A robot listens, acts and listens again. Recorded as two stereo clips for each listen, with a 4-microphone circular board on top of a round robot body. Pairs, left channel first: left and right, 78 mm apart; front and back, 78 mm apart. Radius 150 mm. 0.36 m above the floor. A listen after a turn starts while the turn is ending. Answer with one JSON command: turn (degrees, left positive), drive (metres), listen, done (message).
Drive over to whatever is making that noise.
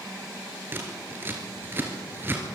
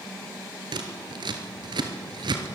{"turn": -155}
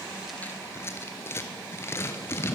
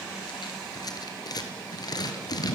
{"turn": 35}
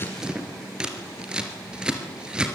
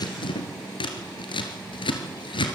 {"turn": -10}
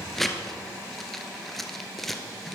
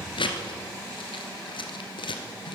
{"drive": 1.0}
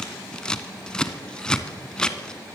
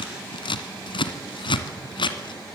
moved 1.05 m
{"turn": 10}
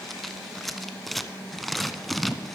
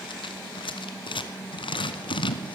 {"drive": 1.0}
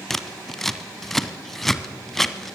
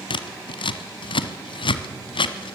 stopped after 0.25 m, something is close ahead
{"done": "Arrived at the scissors, straight ahead."}